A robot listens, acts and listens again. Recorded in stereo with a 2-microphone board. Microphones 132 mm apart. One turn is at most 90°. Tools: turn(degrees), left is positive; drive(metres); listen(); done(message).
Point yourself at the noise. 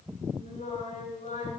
turn(degrees=75)
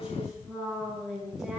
done("Found it: singing, straight ahead.")